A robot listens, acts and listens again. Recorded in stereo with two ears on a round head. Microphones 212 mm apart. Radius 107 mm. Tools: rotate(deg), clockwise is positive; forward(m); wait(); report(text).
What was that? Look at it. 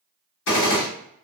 rotate(-55)
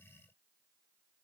wait()
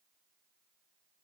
report("I heard a gunshot, but can't make it out now. It was about straight ahead or 70° left.")